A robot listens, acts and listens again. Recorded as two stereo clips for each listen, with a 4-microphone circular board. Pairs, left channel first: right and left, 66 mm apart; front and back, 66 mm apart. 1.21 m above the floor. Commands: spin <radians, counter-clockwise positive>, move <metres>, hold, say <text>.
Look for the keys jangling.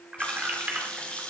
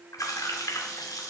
spin 0.44
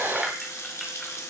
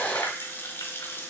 hold
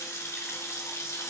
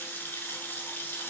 hold
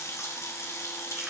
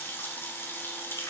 say I heard keys jangling from this way, but can't make it out now.